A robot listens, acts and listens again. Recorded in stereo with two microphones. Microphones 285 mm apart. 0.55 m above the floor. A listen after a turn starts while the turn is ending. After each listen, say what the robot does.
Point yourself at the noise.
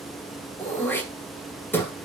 Turn 30° left.
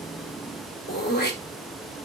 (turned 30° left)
Turn 145° left.
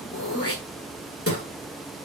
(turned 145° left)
Turn 55° left.
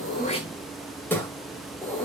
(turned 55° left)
Facing the throat clearing, 1 to 2 m away.